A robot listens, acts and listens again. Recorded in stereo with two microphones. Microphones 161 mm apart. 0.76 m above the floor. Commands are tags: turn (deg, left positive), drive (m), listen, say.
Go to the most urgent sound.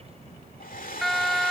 <turn deg="30"/>
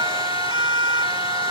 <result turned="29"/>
<turn deg="-30"/>
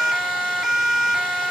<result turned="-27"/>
<drive m="1.0"/>
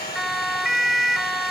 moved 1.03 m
<drive m="1.0"/>
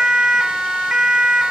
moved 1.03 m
<drive m="1.0"/>
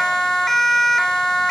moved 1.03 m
<drive m="1.0"/>
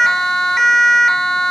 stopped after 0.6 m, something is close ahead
<say>I am next to the siren.</say>